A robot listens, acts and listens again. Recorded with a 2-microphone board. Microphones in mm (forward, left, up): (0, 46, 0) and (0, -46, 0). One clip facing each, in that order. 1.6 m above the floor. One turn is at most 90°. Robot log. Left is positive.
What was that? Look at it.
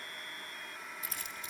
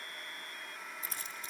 note: The keys jangling: about 35° right or 145° right.
cmd yaw -35
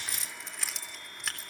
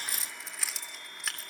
end: Found it: keys jangling, straight ahead, 2 to 4 m away.